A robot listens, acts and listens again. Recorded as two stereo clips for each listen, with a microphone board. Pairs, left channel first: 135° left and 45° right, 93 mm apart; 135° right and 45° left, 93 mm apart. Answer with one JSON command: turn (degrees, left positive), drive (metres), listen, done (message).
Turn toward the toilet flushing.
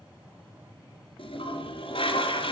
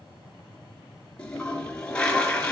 {"turn": 145}
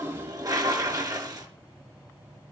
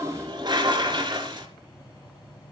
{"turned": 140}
{"done": "Facing the toilet flushing, 2 to 4 m away."}